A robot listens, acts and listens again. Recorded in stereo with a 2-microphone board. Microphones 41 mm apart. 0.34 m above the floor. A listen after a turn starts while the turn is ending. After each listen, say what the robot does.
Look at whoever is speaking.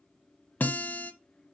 Keep listening.
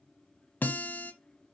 Keep listening.
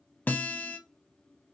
I can't make out anyone speaking to turn to.